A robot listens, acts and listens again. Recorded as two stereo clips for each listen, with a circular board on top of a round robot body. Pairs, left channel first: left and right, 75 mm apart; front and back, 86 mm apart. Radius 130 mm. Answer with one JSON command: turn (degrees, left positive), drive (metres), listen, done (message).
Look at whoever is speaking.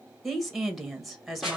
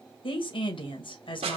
{"done": "Facing the woman speaking."}